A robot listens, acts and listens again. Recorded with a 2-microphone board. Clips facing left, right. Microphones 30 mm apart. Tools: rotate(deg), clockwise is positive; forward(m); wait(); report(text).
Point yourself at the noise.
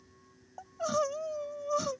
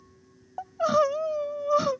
rotate(35)
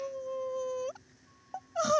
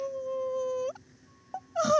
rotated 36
report("Facing the crying.")